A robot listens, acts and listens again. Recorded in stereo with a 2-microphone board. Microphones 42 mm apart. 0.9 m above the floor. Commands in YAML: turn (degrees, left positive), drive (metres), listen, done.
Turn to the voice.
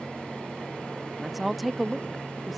turn: 30
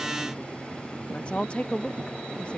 turn: 145
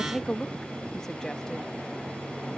turn: 15
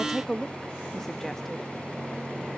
done: "Found it: a woman speaking, straight ahead."